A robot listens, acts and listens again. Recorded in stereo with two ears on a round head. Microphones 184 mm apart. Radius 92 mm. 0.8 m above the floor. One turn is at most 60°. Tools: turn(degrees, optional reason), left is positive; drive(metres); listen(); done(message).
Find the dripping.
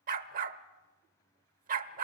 listen()
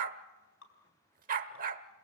turn(degrees=60, reason="The dripping: about 65° left or 115° left.")
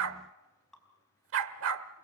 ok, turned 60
done("Facing the dripping.")